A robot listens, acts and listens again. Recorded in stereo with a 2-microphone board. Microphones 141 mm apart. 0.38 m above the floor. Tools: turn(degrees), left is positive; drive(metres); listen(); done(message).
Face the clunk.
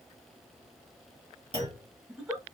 turn(degrees=-45)
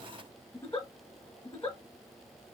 listen()
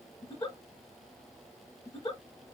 done("I heard a clunk, but can't make it out now. It was about straight ahead or 90° right.")